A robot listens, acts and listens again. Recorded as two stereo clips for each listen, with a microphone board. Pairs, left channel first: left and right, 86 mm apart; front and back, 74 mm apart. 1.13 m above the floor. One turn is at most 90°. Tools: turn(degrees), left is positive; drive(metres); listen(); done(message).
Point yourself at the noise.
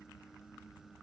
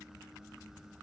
listen()
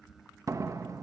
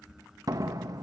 turn(degrees=-90)
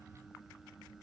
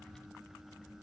turn(degrees=-50)
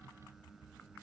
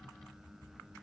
done("Facing where the door slam came from. I can't hear it now.")